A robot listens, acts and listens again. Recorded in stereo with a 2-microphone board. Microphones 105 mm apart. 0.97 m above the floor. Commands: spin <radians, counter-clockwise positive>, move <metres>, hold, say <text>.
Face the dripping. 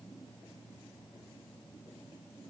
hold
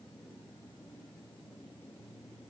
hold
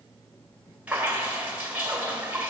spin -0.52
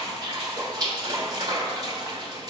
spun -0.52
spin -2.44
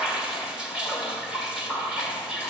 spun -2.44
spin -0.17
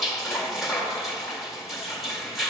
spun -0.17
say Found it: dripping, straight ahead, 1 to 2 m away.